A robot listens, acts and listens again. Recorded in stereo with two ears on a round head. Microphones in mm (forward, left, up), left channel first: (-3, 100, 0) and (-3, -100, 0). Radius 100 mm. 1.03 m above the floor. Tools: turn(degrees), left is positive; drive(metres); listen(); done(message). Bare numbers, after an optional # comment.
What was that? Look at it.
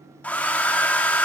turn(30)
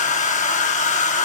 # So it is at 140° left.
turn(140)
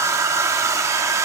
# The hair dryer is now 15° right.
turn(-15)
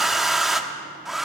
done("Facing the hair dryer, under 1 m away.")